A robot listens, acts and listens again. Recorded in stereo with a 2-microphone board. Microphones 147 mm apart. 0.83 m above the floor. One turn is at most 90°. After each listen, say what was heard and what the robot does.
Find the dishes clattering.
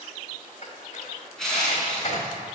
The dishes clattering: about 50° left or 130° left. Turn 50° left.
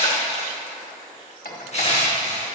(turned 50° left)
So it is at 85° left. Turn 85° left.
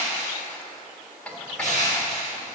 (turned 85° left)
The dishes clattering is now 10° left. Turn 10° left.
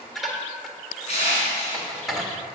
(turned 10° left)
Facing the dishes clattering, 1 to 2 m away.